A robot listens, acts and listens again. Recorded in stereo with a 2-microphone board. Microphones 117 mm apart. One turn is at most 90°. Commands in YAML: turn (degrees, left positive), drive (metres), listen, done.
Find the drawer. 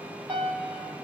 listen: true
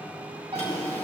turn: 60
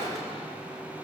done: "Found it: a drawer, straight ahead, 2 to 4 m away."